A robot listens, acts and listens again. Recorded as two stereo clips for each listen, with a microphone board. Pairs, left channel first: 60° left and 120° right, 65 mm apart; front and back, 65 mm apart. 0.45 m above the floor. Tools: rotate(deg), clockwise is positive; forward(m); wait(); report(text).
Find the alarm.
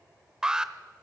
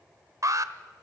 rotate(-160)
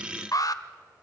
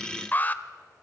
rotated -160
rotate(-60)
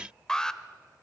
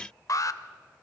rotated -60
rotate(20)
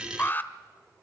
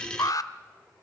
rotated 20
report("Found it: an alarm, straight ahead.")